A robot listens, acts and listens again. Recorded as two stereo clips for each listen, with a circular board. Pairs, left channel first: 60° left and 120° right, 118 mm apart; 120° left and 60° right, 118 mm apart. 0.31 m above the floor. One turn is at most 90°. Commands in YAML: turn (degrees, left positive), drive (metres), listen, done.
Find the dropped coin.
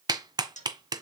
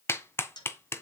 turn: 65
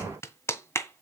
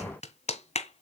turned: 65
done: "Facing where the dropped coin came from. I can't hear it now."